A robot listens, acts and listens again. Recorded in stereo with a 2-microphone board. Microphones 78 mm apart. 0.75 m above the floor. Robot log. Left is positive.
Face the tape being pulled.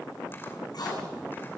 note: The tape being pulled: about 60° left or 120° left.
cmd yaw +60
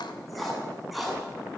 end: Facing the tape being pulled, over 4 m away.